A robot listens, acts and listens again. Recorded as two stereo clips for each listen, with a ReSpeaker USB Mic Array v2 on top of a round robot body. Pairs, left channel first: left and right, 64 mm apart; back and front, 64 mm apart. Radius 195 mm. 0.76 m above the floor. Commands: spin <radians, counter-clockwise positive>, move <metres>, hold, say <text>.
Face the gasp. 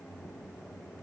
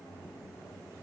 hold
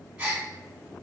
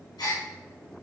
spin -2.88
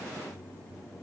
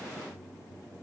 say I heard a gasp from this way, but can't make it out now.